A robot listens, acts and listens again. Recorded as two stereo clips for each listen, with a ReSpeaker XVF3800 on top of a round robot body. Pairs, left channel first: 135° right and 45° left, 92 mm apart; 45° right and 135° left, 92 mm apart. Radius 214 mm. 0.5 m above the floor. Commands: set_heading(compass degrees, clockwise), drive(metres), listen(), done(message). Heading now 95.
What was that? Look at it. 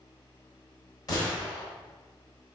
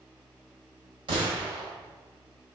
set_heading(280)
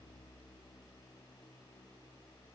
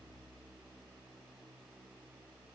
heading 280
done("Facing where the gunshot came from. I can't hear it now.")